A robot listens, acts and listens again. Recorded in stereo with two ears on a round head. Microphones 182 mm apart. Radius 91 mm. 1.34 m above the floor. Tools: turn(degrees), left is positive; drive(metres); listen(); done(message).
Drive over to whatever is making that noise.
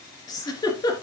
turn(degrees=20)
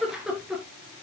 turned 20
drive(metres=1.0)
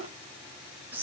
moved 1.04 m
turn(degrees=-10)
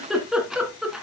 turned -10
drive(metres=1.0)
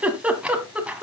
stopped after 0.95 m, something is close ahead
turn(degrees=-10)
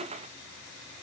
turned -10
listen()
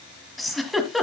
done("I am next to the giggle.")